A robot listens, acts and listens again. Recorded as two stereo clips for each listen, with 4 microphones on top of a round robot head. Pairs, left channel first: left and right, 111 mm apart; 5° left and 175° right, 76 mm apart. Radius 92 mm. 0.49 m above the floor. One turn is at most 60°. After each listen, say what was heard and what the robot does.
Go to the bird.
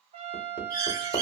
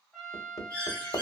The bird: 40° right. Turn 40° right.
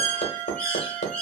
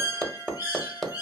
The bird is now 15° left. Turn 15° left.
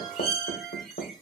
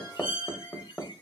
Drive 1.0 m forward.
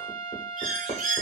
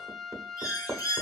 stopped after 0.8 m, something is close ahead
The bird is now 10° right. Turn 10° right.
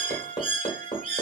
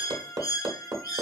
I am next to the bird.